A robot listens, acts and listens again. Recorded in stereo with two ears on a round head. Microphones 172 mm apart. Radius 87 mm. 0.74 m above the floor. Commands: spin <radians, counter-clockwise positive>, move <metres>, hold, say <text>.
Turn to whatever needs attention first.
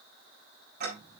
hold
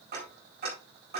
hold
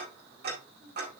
say I can't make out anything urgent to turn to.